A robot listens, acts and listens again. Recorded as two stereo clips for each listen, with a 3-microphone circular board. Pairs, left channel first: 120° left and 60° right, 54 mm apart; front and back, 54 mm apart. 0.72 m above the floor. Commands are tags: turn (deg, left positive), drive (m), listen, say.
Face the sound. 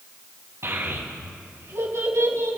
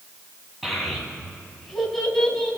<turn deg="-80"/>
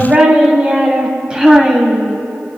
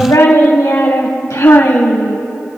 <turn deg="20"/>
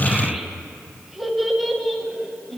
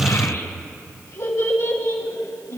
<turn deg="25"/>
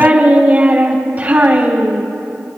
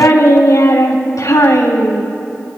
<say>Facing the child speaking.</say>